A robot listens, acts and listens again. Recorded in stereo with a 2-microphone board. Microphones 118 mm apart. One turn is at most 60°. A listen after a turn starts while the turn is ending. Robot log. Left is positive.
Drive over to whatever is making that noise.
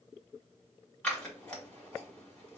cmd yaw +30
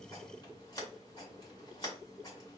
note: So it is at 140° left.
cmd yaw +60
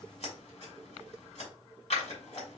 note: The scissors is now 90° left.
cmd yaw +60
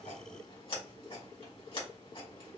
note: The scissors is now 60° left.
cmd yaw +60
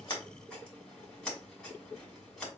cmd fwd 1.0
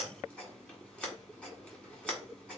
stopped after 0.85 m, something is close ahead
note: The scissors is now 10° left.
cmd yaw +10
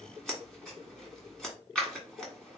end: Arrived at the scissors, straight ahead.